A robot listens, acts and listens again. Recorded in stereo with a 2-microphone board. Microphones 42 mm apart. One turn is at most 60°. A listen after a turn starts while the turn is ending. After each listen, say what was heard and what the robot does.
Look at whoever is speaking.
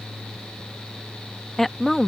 Turn 30° left.
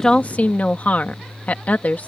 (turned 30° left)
So it is at 140° left. Turn 60° left.
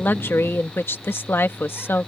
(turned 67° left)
The woman speaking is now 75° left. Turn 60° left.
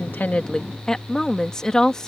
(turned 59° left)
The woman speaking is now 15° left. Turn 15° left.
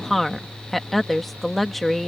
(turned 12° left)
Facing the woman speaking.